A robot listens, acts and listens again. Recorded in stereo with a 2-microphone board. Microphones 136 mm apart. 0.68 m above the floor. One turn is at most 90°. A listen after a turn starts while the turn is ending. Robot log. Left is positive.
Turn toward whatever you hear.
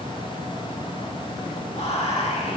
note: The whispering: about 50° left or 130° left.
cmd yaw +50
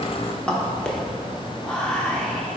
end: Found it: whispering, straight ahead.